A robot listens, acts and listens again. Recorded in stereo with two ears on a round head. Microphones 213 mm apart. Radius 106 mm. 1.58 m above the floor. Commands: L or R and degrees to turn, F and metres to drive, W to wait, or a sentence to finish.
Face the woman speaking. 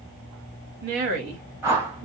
R45
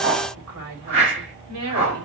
R75
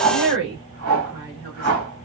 R45
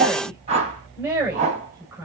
Found it: a woman speaking, straight ahead, over 4 m away.